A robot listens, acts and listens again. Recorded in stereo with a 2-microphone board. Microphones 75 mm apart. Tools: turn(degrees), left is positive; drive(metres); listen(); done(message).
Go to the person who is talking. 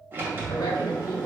turn(degrees=70)
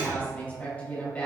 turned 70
turn(degrees=20)
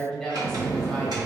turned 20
drive(metres=1.0)
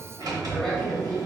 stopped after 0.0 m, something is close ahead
done("Something is in my way. I am facing the woman speaking but have not reached it.")